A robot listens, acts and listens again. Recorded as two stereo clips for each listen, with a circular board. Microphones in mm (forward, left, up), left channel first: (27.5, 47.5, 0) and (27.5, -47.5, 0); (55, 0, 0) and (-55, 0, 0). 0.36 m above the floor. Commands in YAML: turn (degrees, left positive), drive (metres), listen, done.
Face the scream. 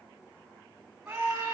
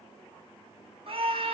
turn: -170
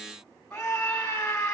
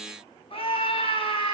turn: 10
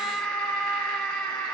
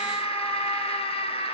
done: "Facing the scream, 2 to 4 m away."